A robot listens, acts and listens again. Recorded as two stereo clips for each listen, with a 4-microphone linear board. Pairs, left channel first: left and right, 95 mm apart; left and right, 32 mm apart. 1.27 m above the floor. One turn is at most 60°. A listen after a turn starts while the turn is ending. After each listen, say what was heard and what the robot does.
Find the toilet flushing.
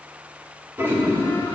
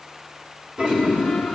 The toilet flushing: about 25° right or 155° right. Turn 25° right.
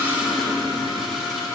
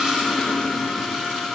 Facing the toilet flushing.